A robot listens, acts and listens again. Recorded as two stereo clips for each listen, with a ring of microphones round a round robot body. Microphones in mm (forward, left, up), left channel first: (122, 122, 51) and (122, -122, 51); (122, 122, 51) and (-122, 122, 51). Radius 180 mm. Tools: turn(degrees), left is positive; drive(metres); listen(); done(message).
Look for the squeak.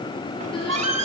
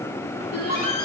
turn(degrees=-110)
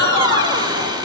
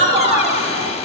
turn(degrees=-15)
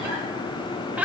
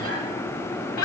done("Found it: a squeak, straight ahead, 2 to 4 m away.")